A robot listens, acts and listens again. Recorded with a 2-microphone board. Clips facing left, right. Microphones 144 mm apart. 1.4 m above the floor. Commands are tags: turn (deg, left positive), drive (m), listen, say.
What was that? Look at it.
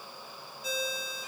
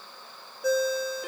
<turn deg="-65"/>
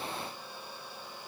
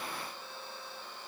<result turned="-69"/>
<listen/>
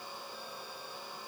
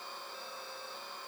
<listen/>
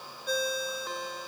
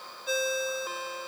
<say>Found it: a ringtone, straight ahead.</say>